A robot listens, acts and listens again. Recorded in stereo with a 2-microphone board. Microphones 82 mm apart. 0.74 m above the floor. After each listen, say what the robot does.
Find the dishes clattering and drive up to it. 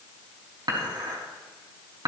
Turn 60° right.
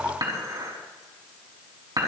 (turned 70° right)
Turn 50° right.
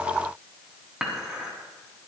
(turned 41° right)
Drive 1.0 m forward.
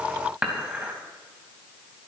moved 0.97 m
Turn 10° right.
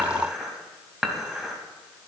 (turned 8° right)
Drive 1.0 m forward.
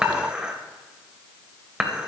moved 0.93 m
Turn 10° right.
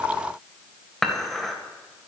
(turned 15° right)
Drive 1.0 m forward.
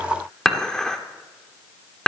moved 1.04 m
Turn 10° left.
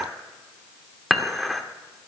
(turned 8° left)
Drive 1.0 m forward.
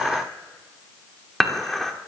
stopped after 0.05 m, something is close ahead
I am next to the dishes clattering.